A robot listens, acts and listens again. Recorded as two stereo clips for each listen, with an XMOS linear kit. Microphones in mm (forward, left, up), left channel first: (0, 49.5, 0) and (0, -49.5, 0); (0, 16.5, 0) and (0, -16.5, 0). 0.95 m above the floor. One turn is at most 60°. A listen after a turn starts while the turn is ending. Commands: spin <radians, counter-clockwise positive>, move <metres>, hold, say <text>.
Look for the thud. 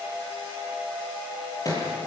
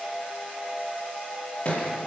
spin 0.61
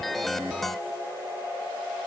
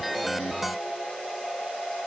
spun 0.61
hold
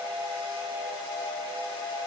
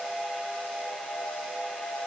say I heard a thud, but can't make it out now. It was about straight ahead or 110° left.